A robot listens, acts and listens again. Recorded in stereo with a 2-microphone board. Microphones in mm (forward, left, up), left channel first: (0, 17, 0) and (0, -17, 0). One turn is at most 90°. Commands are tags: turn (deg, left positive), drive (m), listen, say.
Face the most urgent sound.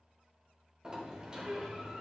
<listen/>
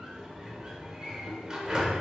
<listen/>
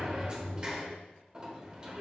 <say>I can't make out anything urgent to turn to.</say>